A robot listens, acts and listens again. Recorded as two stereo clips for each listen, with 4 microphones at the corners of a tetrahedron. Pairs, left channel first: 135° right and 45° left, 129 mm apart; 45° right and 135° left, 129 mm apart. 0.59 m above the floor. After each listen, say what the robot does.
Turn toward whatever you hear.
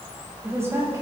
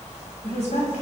Turn 25° right.
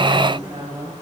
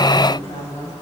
Found it: a woman speaking, straight ahead, 2 to 4 m away.